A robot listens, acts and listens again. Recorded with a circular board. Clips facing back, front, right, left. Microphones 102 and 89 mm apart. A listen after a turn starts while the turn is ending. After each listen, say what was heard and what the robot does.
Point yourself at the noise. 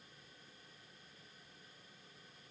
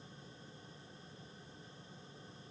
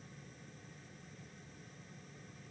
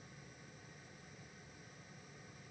Keep listening.
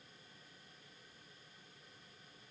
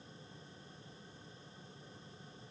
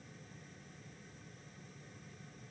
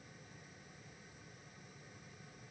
Keep listening.
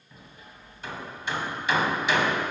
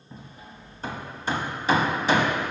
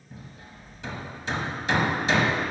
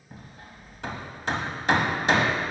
The hammering: 50° left. Turn 50° left.
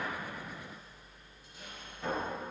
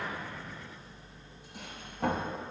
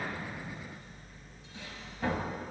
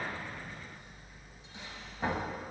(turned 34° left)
The hammering is now 20° left. Turn 20° left.
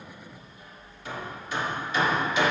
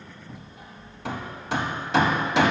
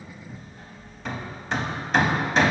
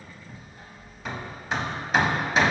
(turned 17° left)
Found it: hammering, straight ahead.